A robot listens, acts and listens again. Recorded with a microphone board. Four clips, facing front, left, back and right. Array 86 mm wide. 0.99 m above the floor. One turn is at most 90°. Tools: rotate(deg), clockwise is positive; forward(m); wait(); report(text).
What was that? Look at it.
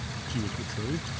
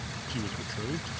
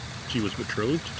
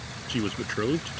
rotate(90)
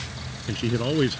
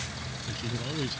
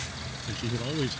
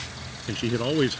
rotate(55)
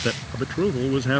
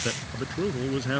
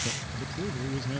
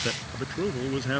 report("Facing the man speaking.")